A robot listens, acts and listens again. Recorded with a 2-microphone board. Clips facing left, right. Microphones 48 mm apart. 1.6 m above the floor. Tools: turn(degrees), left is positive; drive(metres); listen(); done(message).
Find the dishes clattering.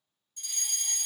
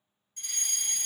listen()
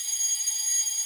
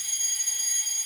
listen()
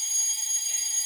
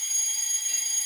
done("I can't make out dishes clattering to turn to.")